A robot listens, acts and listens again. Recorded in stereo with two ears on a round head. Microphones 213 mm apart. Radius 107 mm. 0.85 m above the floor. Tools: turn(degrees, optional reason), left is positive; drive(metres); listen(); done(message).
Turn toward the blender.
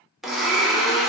turn(degrees=30)
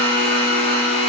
turn(degrees=150, reason="So it is at 150° left.")
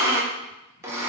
turn(degrees=-15, reason="The blender is now 15° right.")
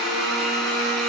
done("Found it: a blender, straight ahead.")